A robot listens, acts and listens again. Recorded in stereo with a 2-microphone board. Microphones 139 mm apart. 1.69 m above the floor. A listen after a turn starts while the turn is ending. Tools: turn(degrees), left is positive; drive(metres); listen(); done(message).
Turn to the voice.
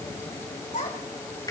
turn(degrees=90)
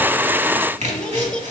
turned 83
turn(degrees=10)
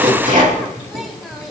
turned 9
listen()
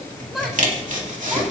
done("Facing the child speaking, 2 to 4 m away.")